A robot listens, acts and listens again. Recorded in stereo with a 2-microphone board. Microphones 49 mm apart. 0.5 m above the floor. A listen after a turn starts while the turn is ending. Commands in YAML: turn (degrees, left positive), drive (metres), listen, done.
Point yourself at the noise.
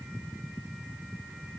listen: true
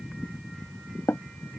turn: 70
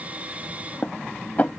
turn: 35
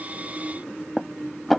done: "Facing the dishes clattering."